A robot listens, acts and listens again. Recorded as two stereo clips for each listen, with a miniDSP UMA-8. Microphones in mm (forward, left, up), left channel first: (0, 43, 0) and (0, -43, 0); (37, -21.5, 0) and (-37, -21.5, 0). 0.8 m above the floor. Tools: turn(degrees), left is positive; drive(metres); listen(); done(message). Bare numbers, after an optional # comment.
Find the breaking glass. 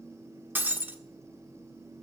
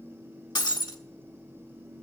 # The breaking glass: 25° right.
turn(-25)
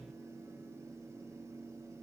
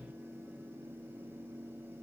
done("I heard breaking glass from this way, but can't make it out now.")